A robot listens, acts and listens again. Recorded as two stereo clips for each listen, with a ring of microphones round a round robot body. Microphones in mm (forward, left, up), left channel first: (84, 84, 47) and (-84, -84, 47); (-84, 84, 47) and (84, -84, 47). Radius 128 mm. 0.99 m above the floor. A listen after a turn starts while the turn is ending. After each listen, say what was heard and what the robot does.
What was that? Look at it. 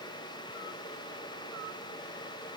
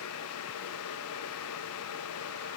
Keep listening.
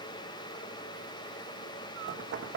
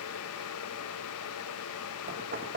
The knocking: 95° right. Turn 95° right.
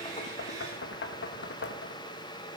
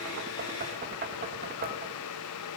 Found it: knocking, straight ahead.